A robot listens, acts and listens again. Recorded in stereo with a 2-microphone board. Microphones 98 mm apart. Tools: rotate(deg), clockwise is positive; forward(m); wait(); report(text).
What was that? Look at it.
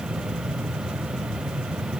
wait()
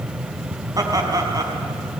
rotate(40)
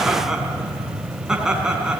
rotate(10)
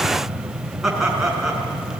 report("Found it: laughter, straight ahead, over 4 m away.")